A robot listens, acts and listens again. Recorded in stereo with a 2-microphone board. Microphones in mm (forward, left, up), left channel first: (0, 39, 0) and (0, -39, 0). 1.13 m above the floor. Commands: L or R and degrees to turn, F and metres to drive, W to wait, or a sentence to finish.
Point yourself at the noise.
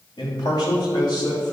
L65
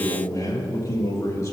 L40
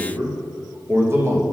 R35
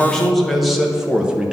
R10
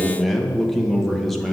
Found it: a man speaking, straight ahead, 1 to 2 m away.